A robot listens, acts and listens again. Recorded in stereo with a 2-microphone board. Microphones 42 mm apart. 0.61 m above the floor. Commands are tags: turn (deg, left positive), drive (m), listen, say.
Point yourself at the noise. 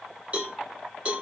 <turn deg="-35"/>
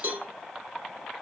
<turn deg="-105"/>
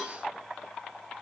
<listen/>
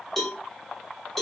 <turn deg="10"/>
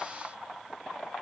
<listen/>
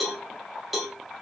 <say>Facing the cowbell.</say>